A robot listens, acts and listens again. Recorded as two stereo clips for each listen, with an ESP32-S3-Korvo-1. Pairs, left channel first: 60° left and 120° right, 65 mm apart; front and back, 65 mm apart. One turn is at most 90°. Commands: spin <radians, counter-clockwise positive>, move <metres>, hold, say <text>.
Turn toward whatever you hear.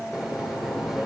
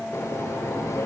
spin -0.61
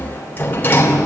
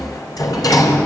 say Found it: a sliding door, straight ahead, 2 to 4 m away.